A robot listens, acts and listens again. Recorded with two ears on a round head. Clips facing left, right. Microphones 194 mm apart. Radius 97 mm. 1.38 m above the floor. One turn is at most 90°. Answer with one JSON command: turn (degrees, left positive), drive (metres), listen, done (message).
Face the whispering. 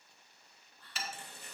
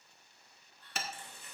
{"turn": 65}
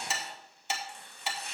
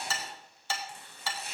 {"listen": true}
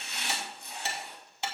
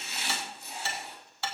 {"listen": true}
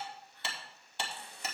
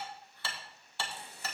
{"done": "I heard whispering, but can't make it out now. It was about straight ahead or 50° left."}